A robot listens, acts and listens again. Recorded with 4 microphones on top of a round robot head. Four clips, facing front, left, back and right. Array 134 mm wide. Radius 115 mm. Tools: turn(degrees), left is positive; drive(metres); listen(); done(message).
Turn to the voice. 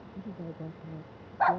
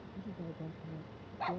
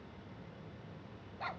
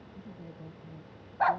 turn(degrees=10)
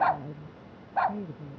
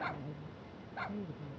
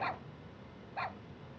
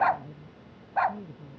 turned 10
done("Found it: a woman speaking, straight ahead.")